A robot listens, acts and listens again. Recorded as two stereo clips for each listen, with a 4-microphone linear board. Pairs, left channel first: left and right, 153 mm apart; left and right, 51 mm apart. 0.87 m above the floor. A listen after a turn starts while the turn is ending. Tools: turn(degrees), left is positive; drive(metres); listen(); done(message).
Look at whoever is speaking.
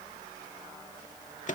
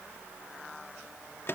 listen()
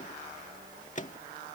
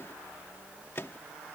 listen()
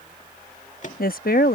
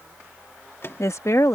turn(degrees=65)
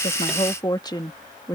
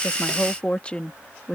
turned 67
turn(degrees=25)
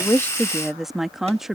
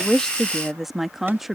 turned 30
done("Found it: a woman speaking, straight ahead.")